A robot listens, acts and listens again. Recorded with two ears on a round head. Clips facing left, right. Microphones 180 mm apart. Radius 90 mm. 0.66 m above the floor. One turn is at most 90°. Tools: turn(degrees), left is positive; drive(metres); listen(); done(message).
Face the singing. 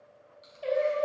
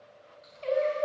turn(degrees=30)
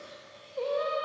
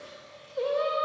turn(degrees=-10)
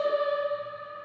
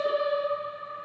turn(degrees=10)
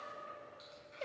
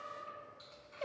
turn(degrees=25)
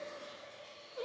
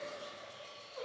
turn(degrees=30)
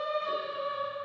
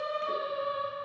turn(degrees=35)
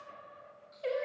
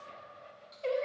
done("Found it: singing, straight ahead.")